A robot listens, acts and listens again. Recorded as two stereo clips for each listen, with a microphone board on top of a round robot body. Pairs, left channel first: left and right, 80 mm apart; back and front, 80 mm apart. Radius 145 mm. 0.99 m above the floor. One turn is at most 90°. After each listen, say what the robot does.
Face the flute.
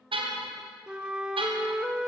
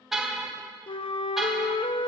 Turn 90° right.
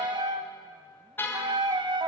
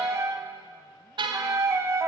Turn 60° right.
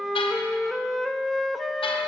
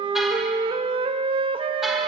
Facing the flute.